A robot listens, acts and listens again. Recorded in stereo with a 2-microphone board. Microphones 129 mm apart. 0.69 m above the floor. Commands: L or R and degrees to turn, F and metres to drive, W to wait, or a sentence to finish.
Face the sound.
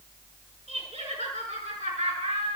R70
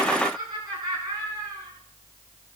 R30
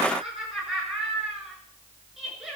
Facing the laughter, over 4 m away.